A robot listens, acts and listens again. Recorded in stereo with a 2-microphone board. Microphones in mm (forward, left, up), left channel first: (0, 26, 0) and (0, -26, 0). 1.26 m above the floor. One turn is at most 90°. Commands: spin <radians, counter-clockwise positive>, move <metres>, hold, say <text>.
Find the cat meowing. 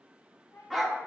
spin 0.96
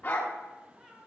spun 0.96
spin -0.17
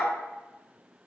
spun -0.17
hold
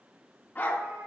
hold
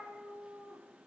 spin -0.61
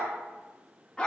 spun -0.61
hold
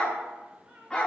spin -0.35
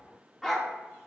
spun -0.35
hold
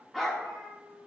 say Found it: a cat meowing, straight ahead, 2 to 4 m away.